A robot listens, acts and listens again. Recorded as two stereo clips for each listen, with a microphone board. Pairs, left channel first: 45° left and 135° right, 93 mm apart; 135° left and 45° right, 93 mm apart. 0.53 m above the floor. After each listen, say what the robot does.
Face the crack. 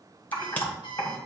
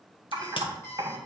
Turn 115° left.
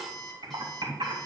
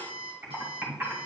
I heard a crack from this way, but can't make it out now.